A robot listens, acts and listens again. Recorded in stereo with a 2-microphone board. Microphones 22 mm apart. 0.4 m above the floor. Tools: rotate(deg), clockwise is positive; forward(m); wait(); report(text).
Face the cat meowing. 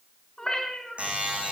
rotate(-30)
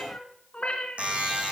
rotate(-110)
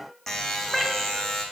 report("Facing the cat meowing.")